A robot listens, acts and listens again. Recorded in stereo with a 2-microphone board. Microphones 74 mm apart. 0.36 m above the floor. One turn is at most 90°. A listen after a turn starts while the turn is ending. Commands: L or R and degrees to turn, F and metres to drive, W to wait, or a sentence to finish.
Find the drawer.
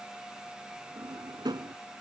R90
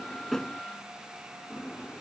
L15
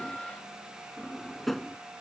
Facing the drawer.